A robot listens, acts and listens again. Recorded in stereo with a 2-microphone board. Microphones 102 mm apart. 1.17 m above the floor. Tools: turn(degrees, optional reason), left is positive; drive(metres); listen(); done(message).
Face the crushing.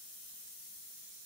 listen()
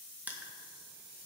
turn(degrees=-30)
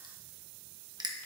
turn(degrees=-135, reason="So it is at 135° right.")
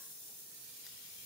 listen()
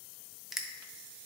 done("Found it: crushing, straight ahead.")